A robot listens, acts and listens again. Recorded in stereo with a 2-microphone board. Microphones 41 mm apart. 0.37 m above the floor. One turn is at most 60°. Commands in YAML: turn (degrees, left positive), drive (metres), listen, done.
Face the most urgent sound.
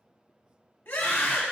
turn: 55
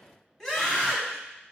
turn: 10
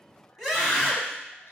done: "Facing the scream."